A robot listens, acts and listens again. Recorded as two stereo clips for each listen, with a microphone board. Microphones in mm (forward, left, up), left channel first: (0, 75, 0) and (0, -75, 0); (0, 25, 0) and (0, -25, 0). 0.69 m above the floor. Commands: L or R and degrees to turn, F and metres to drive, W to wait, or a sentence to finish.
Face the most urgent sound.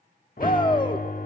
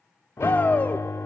L35
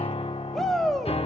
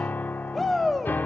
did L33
Found it: a shout, straight ahead.